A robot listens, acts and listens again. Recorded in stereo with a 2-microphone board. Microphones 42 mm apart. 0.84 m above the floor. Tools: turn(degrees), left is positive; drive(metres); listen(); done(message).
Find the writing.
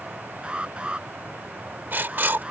turn(degrees=-55)
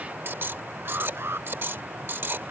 turn(degrees=-70)
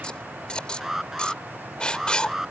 turn(degrees=25)
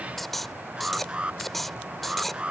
done("Found it: writing, straight ahead.")